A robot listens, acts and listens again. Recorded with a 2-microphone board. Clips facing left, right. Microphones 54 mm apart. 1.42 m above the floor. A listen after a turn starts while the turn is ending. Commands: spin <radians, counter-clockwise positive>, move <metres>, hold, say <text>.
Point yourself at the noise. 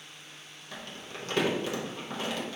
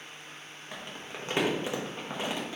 spin -0.35
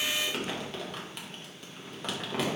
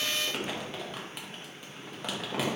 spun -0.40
say Found it: crumpling, straight ahead.